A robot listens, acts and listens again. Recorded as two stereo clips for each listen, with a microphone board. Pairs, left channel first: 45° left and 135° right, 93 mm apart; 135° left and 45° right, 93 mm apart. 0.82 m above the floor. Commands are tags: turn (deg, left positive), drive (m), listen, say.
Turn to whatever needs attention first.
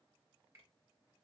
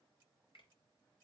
<listen/>
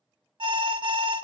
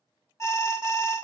<turn deg="-165"/>
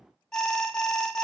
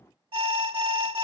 <turn deg="-40"/>
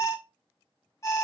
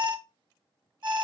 <turn deg="-10"/>
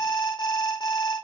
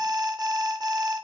<say>Facing the alarm, 1 to 2 m away.</say>